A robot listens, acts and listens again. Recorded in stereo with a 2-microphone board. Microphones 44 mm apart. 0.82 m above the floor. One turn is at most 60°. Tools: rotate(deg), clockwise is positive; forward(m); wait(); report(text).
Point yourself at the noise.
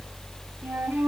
rotate(45)
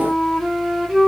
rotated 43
report("Facing the flute.")